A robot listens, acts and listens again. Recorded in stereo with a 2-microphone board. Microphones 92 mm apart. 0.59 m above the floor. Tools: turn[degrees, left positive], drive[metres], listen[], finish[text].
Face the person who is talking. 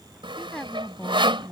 Action: turn[30]
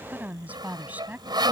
Thought: So it is at 20° right.
Action: turn[-20]
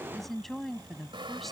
Action: finish[Found it: a woman speaking, straight ahead.]